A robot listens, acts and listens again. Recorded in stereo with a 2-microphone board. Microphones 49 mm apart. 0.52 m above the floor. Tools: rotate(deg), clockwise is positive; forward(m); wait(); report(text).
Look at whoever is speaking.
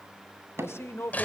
rotate(-60)
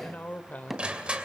rotate(-40)
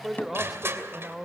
report("Facing the man speaking, 1 to 2 m away.")